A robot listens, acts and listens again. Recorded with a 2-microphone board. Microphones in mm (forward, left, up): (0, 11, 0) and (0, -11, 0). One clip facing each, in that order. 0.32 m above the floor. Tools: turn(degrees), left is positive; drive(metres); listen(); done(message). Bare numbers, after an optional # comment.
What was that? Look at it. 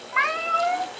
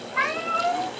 # The cat meowing: about 60° left or 120° left.
turn(60)
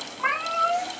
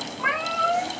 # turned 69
# So it is at 20° left.
turn(20)
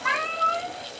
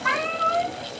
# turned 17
# The cat meowing is now 15° left.
turn(15)
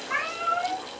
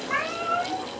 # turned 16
done("Facing the cat meowing.")